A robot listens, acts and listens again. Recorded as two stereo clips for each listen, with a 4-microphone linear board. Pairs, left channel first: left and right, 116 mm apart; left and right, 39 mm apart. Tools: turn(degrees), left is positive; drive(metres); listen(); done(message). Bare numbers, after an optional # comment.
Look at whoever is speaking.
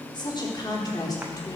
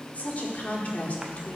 # The woman speaking: about 35° left or 145° left.
turn(35)
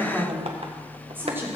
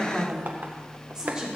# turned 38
# So it is at 20° right.
turn(-20)
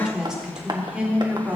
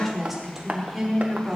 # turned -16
# The woman speaking is now 10° right.
turn(-10)
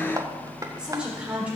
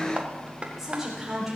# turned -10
# The woman speaking is now 10° right.
turn(-10)
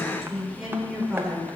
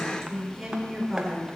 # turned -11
done("Found it: a woman speaking, straight ahead.")